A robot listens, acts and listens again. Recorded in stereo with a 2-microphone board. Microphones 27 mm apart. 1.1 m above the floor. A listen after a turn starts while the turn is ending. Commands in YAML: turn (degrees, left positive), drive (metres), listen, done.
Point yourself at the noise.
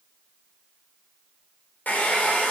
turn: 90
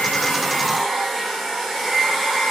done: "Found it: a hair dryer, straight ahead, 2 to 4 m away."